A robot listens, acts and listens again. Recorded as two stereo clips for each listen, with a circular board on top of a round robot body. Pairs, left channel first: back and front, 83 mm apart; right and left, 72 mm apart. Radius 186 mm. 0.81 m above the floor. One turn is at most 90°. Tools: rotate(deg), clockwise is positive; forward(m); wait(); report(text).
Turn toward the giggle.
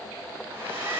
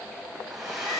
wait()
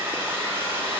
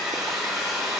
wait()
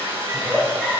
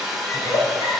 rotate(90)
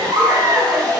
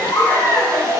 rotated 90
rotate(50)
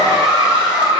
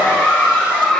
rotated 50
rotate(15)
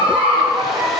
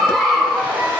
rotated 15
report("Facing the giggle, 2 to 4 m away.")